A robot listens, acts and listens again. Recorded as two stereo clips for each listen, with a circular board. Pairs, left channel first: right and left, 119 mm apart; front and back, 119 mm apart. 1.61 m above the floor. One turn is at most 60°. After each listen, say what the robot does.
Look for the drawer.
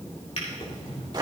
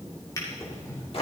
Turn 60° right.
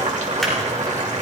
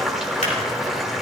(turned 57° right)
Keep listening.
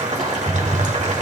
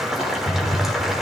Facing the drawer, 2 to 4 m away.